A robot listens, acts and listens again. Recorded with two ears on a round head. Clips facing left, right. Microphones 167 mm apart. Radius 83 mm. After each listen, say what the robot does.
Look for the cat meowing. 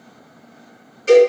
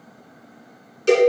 Keep listening.
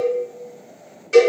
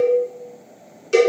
Keep listening.
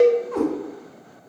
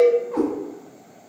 Turn 30° left.
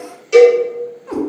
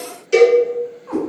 Turn 150° left.
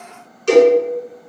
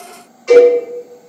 Keep listening.
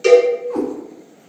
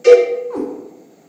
Turn 35° left.
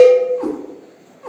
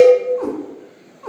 Turn 15° left.
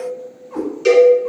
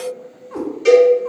Found it: a cat meowing, straight ahead.